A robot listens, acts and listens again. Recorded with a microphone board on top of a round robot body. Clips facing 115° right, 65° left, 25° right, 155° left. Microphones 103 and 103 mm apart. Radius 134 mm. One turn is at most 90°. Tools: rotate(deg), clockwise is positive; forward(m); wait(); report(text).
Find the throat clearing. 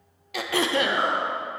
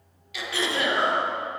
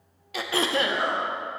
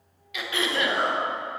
rotate(75)
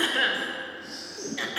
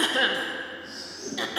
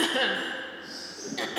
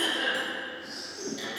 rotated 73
report("Found it: throat clearing, straight ahead, under 1 m away.")